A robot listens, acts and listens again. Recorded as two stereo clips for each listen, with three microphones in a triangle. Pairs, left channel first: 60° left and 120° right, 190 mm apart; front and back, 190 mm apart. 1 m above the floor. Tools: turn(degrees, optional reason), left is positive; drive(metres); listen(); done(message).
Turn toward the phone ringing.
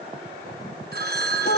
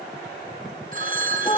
turn(degrees=-145, reason="The phone ringing: 145° right.")
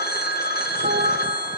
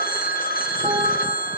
turn(degrees=35, reason="The phone ringing is now 35° left.")
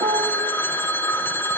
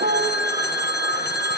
turn(degrees=-20, reason="The phone ringing is now 20° right.")
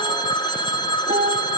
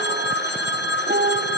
done("Facing the phone ringing, 1 to 2 m away.")